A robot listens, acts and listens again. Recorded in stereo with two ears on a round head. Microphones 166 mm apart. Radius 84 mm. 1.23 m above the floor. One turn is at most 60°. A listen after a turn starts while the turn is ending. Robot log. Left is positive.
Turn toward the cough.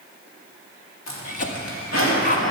note: The cough: about 45° left or 135° left.
cmd yaw +45
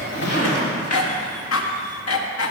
note: So it is at 85° left.
cmd yaw +60
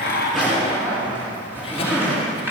note: Nothing new. It was at 25° left.
cmd yaw +25
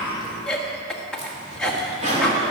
end: Facing the cough, 1 to 2 m away.